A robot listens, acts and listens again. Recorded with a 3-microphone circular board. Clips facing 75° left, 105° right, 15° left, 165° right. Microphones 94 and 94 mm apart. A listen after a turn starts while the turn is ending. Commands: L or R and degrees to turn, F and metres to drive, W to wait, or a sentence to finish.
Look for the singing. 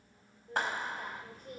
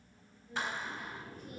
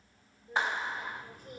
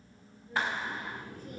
L35
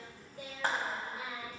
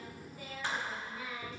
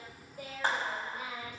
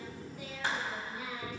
Facing the singing, 2 to 4 m away.